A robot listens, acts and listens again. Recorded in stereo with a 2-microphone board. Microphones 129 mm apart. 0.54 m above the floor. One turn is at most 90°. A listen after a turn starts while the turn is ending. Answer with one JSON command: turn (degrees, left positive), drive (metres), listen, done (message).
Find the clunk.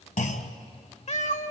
{"turn": 90}
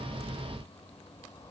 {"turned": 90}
{"done": "I heard a clunk from this way, but can't make it out now."}